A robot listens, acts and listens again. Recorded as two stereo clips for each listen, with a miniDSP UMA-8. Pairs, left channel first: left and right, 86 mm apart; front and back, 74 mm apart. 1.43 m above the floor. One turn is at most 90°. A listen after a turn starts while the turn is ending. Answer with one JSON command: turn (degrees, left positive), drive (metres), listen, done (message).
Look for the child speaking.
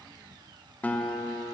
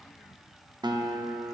{"listen": true}
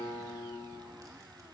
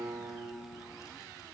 {"listen": true}
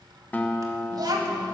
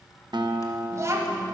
{"turn": -90}
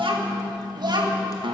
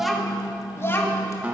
{"turn": -65}
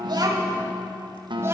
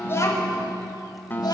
{"turn": -30}
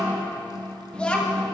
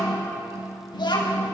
{"turn": 15}
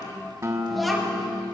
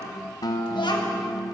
{"done": "Facing the child speaking."}